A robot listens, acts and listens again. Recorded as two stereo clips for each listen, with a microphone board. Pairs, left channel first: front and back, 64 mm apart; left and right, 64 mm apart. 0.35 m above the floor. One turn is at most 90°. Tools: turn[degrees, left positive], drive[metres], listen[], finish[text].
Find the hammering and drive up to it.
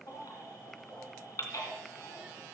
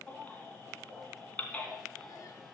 Action: listen[]
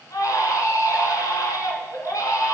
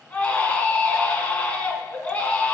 Action: listen[]
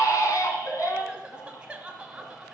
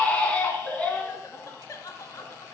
Action: finish[I can't make out hammering to turn to.]